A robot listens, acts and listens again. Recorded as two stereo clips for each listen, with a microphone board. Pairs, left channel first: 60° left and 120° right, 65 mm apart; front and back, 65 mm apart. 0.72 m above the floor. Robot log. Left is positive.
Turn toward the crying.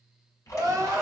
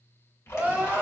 note: The crying: 115° right.
cmd yaw -115
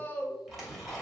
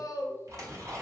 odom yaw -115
end: Facing the crying, under 1 m away.